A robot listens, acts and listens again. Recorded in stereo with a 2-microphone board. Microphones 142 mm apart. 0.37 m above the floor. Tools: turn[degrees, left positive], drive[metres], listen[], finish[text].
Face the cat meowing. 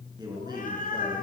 Action: turn[90]
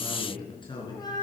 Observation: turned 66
Thought: So it is at 30° left.
Action: turn[30]
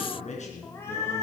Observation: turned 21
Thought: The cat meowing is now 20° left.
Action: turn[20]
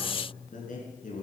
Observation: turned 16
Action: listen[]
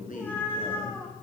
Thought: The cat meowing is now 15° left.
Action: turn[15]
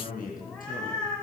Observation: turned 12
Action: finish[Facing the cat meowing.]